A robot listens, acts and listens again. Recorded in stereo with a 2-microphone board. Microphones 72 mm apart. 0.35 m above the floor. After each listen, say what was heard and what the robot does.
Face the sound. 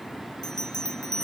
The bell: about 70° left or 110° left. Turn 70° left.
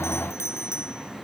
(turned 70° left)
So it is at 40° left. Turn 40° left.
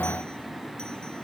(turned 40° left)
Keep listening.
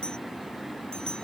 The bell is now 10° left. Turn 10° left.
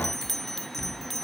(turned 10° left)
Found it: a bell, straight ahead.